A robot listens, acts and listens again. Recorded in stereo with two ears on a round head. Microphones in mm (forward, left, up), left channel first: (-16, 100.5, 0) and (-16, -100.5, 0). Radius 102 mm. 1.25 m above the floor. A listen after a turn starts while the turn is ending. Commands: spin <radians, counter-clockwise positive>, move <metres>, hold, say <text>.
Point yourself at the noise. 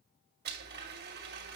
spin -0.79
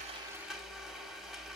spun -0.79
say Found it: a blender, straight ahead.